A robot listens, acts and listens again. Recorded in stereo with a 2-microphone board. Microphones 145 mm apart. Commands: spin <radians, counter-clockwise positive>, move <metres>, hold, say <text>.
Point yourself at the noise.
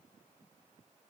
hold
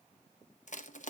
spin 1.05
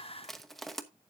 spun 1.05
say Found it: crushing, straight ahead, under 1 m away.